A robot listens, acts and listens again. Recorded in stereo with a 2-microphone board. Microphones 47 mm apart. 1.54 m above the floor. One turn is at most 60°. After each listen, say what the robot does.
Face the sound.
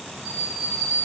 Turn 50° right.
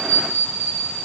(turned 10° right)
Turn 60° right.
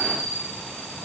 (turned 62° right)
Turn 60° right.
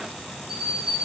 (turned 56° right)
Found it: a bell, straight ahead, over 4 m away.